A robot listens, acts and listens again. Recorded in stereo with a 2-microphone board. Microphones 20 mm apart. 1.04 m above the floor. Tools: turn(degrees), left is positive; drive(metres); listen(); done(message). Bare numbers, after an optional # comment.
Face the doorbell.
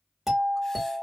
turn(-30)
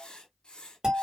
# So it is at 140° right.
turn(-140)
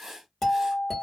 # The doorbell is now 15° left.
turn(15)
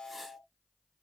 done("Found it: a doorbell, straight ahead, 1 to 2 m away.")